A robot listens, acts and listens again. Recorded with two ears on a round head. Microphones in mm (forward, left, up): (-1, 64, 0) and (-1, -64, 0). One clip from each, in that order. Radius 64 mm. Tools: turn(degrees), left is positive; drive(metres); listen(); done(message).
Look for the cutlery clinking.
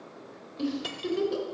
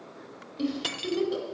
turn(degrees=-35)
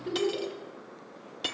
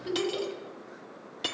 done("Facing the cutlery clinking, under 1 m away.")